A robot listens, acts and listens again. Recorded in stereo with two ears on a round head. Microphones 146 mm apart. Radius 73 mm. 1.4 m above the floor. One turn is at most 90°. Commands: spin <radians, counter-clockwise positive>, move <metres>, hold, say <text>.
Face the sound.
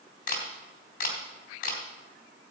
spin 0.96
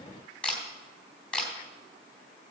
spin 0.17
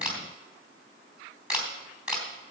say Found it: a camera shutter, straight ahead.